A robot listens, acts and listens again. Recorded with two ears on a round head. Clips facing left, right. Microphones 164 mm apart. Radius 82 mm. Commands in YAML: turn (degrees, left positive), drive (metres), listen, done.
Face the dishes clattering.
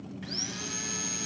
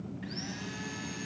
listen: true
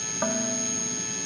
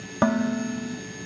turn: -70
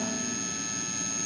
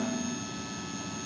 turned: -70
listen: true
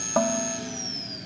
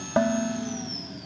turn: -10
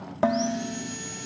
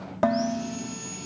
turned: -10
done: "Found it: dishes clattering, straight ahead."